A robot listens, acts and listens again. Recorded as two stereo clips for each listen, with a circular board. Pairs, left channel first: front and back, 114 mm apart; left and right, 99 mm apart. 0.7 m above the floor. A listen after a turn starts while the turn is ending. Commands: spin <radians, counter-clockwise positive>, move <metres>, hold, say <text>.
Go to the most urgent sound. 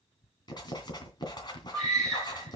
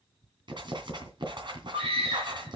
spin -1.48
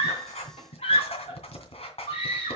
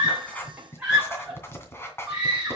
spin -0.17
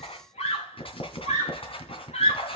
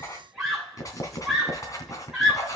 move 1.0
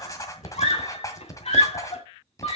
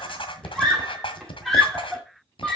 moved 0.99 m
move 1.0
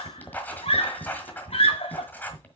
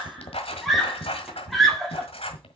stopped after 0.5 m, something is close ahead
say I am next to the scream.